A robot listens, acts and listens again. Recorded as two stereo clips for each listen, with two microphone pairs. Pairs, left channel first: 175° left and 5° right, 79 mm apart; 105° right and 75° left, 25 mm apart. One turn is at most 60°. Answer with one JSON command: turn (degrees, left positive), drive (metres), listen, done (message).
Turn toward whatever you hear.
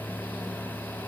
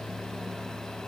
{"listen": true}
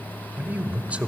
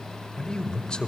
{"turn": -60}
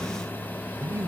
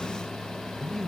{"turn": -35}
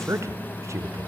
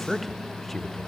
{"turn": -30}
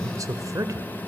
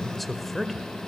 {"turn": -25}
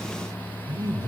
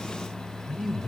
{"done": "Facing the man speaking."}